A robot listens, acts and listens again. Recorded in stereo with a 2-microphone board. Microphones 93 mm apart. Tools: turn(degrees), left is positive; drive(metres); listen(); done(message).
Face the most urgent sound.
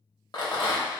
listen()
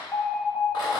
turn(degrees=30)
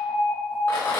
turn(degrees=-15)
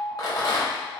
done("Found it: an alarm, straight ahead.")